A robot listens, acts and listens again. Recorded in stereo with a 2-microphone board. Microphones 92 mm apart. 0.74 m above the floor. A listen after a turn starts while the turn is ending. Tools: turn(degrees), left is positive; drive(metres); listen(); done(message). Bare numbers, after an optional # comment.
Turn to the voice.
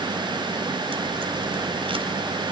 listen()
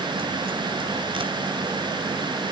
listen()
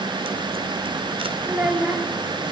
# The child speaking: about 15° right or 165° right.
turn(-15)
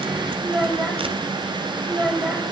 done("Found it: a child speaking, straight ahead, 2 to 4 m away.")